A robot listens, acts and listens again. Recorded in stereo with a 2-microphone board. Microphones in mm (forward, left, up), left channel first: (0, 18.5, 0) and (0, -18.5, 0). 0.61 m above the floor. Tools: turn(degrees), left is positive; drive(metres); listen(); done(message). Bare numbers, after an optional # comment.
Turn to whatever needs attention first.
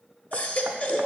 # The baby crying: about 40° left or 140° left.
turn(40)
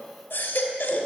# So it is at 100° left.
turn(100)
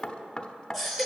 done("Facing the baby crying.")